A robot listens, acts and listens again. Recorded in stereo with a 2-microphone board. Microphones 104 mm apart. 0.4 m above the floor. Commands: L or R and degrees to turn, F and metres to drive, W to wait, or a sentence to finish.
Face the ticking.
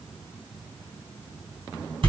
W
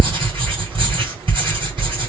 W
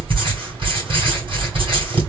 I can't make out ticking, only writing.